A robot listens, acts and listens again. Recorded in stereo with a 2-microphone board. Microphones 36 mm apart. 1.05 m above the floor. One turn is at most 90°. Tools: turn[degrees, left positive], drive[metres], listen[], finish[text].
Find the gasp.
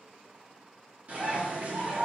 Action: listen[]
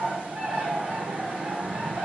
Action: listen[]
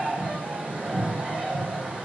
Action: finish[I can't make out a gasp to turn to.]